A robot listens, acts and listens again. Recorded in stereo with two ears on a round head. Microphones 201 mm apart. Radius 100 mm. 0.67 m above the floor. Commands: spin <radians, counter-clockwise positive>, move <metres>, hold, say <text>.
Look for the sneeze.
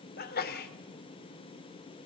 spin 0.79
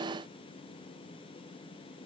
hold
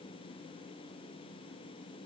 say I heard a sneeze, but can't make it out now. It was about straight ahead or 90° left.